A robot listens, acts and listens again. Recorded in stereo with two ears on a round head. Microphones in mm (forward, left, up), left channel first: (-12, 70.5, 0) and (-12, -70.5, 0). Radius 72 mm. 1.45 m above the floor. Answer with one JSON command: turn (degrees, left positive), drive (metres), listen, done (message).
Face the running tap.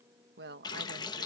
{"turn": 30}
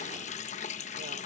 {"turn": 115}
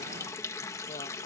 {"turn": 20}
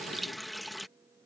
{"done": "Facing the running tap."}